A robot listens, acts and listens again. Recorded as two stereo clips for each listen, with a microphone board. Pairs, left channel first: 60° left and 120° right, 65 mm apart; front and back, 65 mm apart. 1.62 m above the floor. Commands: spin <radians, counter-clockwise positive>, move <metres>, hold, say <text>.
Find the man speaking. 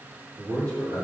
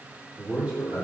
spin -1.83
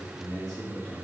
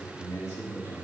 spin -0.26
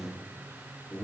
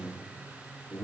spin 0.17
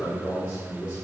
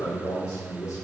spin 0.17
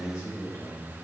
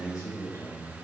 say Facing the man speaking, 2 to 4 m away.